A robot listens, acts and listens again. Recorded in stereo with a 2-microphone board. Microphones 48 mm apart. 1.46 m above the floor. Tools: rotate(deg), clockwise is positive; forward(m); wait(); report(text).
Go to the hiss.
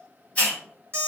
rotate(-25)
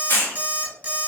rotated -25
rotate(-130)
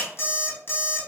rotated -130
wait()
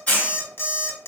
rotate(-25)
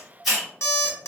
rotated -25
forward(1.0)
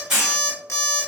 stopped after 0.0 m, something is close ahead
rotate(10)
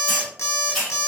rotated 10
report("Blocked. The hiss is further on, straight ahead.")